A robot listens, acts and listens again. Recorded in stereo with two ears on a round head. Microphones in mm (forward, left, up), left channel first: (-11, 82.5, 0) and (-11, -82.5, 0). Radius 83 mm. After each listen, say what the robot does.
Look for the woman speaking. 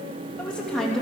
Turn 30° left.
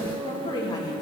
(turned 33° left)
Turn 155° left.
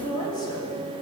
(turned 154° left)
Turn 25° left.
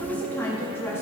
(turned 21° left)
Turn 15° left.
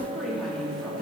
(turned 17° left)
Found it: a woman speaking, straight ahead, over 4 m away.